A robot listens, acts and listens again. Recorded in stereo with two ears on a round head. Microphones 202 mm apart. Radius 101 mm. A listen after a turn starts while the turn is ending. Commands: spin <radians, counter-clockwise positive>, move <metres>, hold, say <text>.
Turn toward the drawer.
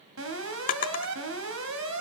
spin 0.70
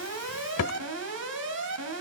spin 1.83
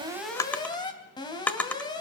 say Found it: a drawer, straight ahead.